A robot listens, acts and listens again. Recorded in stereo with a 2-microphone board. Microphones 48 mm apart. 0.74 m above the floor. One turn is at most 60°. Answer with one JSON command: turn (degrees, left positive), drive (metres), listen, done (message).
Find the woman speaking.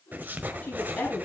{"turn": 30}
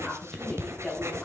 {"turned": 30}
{"done": "Facing the woman speaking."}